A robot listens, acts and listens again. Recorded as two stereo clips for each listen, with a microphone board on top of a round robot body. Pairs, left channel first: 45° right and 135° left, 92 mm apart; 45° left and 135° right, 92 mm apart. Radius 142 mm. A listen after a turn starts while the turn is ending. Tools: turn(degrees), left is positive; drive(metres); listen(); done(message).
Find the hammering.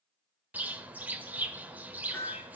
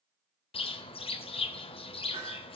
turn(degrees=-110)
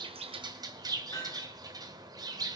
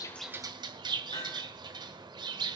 turn(degrees=10)
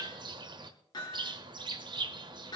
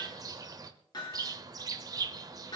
done("Found it: hammering, straight ahead, over 4 m away.")